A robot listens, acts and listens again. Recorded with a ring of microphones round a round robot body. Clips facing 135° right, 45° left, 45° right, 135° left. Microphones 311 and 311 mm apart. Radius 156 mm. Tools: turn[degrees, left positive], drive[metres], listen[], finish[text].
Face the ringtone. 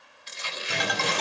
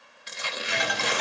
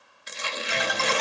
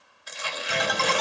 Thought: The ringtone: straight behind.
Action: turn[180]
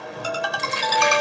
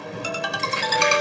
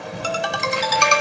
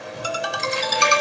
Thought: The ringtone is now 15° right.
Action: turn[-15]
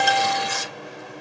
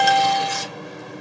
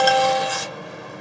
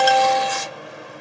Action: finish[Found it: a ringtone, straight ahead, 1 to 2 m away.]